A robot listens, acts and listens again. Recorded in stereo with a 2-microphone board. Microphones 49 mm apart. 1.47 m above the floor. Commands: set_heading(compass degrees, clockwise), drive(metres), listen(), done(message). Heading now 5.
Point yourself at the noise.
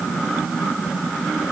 listen()
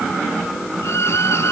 set_heading(275)
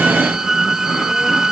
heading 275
set_heading(285)
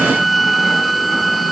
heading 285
done("Facing the violin.")